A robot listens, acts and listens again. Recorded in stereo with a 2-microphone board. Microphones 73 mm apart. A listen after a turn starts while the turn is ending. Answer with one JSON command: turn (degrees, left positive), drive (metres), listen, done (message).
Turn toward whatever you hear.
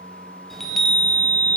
{"turn": 30}
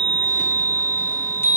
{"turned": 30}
{"turn": 145}
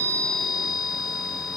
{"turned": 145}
{"done": "Found it: a chime, straight ahead."}